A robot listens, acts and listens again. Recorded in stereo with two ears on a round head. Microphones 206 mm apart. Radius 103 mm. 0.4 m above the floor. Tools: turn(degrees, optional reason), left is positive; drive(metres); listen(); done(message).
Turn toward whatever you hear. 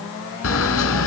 turn(degrees=65, reason="The camera shutter: about 65° left or 115° left.")
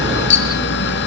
turn(degrees=50, reason="So it is at 50° left.")
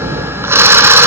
turn(degrees=-10, reason="The camera shutter is now 10° right.")
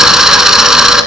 done("Facing the camera shutter, 1 to 2 m away.")